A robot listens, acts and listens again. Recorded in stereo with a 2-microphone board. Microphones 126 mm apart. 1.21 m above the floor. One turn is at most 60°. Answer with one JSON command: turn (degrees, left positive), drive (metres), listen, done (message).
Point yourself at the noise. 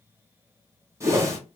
{"turn": -25}
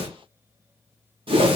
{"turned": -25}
{"turn": -60}
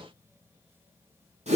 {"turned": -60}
{"turn": -60}
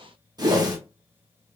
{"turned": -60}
{"turn": -35}
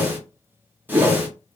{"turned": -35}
{"turn": -15}
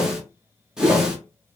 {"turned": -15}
{"done": "Facing the whoosh."}